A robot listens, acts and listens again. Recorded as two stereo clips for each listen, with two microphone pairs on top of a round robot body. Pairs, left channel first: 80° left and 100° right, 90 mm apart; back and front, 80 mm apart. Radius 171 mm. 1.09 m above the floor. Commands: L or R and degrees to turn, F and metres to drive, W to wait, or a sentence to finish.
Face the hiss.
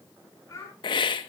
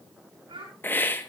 L115
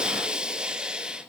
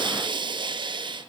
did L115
R20
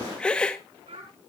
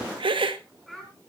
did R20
Found it: a hiss, straight ahead.